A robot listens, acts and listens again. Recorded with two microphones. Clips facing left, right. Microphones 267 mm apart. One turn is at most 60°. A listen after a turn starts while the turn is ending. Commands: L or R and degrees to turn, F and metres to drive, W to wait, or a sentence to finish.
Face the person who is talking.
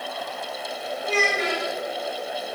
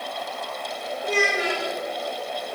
R30
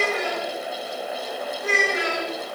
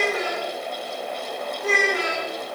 R60
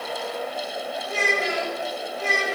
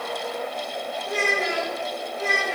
R60
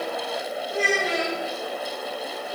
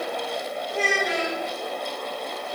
Facing the child speaking, 1 to 2 m away.